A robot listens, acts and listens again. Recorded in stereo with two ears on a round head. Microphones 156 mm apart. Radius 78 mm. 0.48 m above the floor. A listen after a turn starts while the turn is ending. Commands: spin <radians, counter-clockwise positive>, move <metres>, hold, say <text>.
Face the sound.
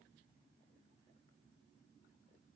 hold
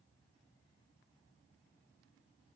hold
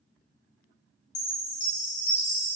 spin 0.70
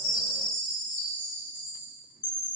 spin 1.75
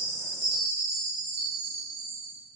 spin -0.35
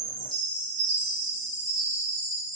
say Facing the chime.